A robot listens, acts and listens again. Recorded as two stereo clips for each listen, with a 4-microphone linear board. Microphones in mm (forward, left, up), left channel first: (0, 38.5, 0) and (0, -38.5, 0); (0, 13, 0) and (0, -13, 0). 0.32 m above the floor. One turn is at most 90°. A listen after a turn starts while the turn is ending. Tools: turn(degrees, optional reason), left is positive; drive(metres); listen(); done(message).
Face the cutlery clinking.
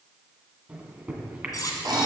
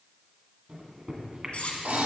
turn(degrees=50, reason="The cutlery clinking: about 50° left or 130° left.")
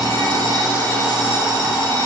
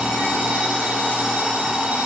listen()
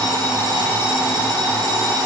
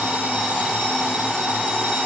listen()
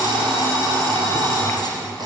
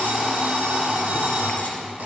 done("I heard cutlery clinking, but can't make it out now. It was about straight ahead or 80° left.")